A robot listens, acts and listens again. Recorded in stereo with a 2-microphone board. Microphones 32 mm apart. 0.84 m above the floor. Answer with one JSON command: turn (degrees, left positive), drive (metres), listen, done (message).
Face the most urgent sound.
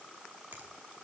{"listen": true}
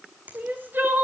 {"turn": -75}
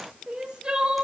{"turn": -30}
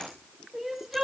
{"turn": -10}
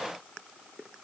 {"listen": true}
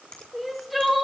{"done": "Found it: crying, straight ahead."}